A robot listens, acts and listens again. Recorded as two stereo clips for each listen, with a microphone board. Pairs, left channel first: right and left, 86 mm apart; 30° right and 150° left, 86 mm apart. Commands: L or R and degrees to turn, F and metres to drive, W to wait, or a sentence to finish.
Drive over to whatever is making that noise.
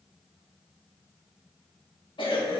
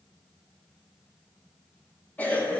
R100
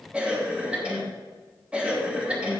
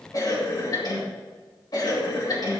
L15
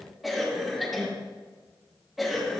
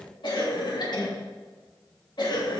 F1.0
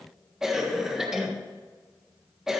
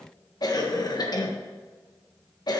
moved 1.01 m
F1.0
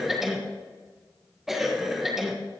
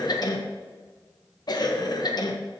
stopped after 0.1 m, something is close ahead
Arrived at the cough, straight ahead.